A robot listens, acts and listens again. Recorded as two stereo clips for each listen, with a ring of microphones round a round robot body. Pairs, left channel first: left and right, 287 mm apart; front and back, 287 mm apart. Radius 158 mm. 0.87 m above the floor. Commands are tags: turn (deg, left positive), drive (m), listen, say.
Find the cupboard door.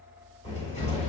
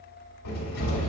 <turn deg="20"/>
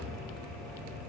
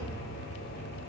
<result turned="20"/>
<say>Found it: a cupboard door, straight ahead, 2 to 4 m away.</say>